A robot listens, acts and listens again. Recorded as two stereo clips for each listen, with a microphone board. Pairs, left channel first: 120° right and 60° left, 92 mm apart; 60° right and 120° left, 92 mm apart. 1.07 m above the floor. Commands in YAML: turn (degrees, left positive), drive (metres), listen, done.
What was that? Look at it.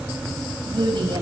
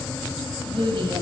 turn: 90
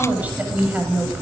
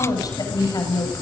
turn: -15
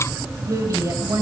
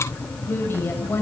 done: "Found it: a woman speaking, straight ahead."